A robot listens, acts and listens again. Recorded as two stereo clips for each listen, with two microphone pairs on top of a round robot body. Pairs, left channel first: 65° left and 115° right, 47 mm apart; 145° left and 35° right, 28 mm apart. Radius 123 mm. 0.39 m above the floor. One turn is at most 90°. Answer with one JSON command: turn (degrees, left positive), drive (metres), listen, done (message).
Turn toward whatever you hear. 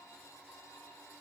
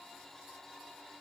{"listen": true}
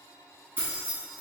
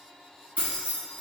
{"turn": -65}
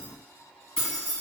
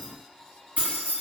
{"done": "Facing the keys jangling, 1 to 2 m away."}